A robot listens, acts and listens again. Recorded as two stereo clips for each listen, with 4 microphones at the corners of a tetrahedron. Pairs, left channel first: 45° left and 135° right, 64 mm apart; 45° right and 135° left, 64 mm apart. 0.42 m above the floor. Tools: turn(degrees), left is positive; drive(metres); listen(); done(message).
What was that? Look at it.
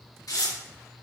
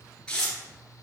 turn(degrees=30)
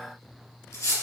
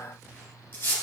turn(degrees=15)
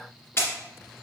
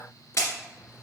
done("Found it: tearing paper, straight ahead, 2 to 4 m away.")